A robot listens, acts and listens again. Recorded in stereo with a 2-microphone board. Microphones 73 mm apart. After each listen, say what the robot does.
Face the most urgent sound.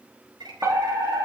Turn 45° right.
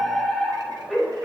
Found it: a fire alarm, straight ahead.